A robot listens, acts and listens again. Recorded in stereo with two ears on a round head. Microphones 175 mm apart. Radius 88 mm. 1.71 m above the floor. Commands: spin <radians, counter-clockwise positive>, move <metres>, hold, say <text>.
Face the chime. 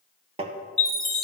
spin 0.52
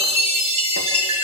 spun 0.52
spin -0.52
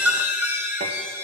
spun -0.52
spin -0.17
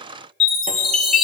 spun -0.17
say Found it: a chime, straight ahead, 1 to 2 m away.